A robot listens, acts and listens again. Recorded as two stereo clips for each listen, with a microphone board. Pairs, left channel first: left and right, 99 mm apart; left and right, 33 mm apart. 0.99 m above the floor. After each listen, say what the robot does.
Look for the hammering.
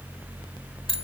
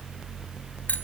Keep listening.
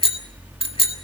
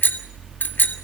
Keep listening.
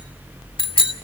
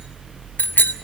I can't make out hammering to turn to.